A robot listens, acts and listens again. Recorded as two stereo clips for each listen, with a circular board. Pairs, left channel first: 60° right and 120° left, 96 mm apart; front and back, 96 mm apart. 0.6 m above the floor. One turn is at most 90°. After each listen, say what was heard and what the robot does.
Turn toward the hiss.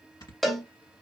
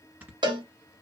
Keep listening.
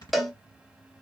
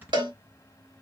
Keep listening.
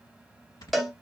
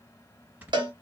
I can't make out a hiss, only snoring and a cowbell.